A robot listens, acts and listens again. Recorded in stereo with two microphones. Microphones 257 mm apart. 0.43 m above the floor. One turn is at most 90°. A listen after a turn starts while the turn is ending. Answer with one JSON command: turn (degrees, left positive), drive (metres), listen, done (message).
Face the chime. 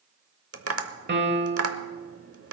{"listen": true}
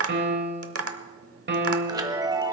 {"turn": -15}
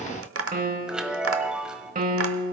{"done": "Found it: a chime, straight ahead, 1 to 2 m away."}